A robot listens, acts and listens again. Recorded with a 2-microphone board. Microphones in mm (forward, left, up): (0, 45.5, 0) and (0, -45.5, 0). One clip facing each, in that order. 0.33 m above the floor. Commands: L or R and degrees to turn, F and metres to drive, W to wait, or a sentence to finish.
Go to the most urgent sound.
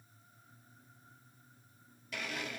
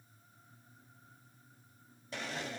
W
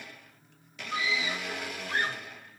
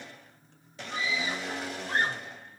R45
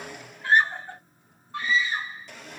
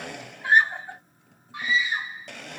R15
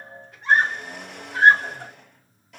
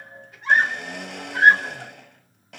F1.0
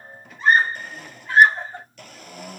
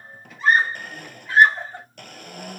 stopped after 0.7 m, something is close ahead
I am next to the scream.